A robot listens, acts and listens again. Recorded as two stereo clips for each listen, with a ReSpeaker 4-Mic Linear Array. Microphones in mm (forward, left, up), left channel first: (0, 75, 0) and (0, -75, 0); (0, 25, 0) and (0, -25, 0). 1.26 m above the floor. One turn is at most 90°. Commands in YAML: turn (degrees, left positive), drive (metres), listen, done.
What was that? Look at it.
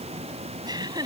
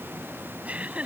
turn: -30
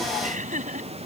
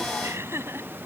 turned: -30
turn: -90
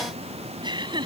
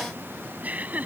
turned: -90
turn: -30
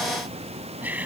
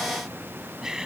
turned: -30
turn: -10
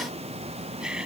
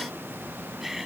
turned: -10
done: "Found it: laughter, straight ahead."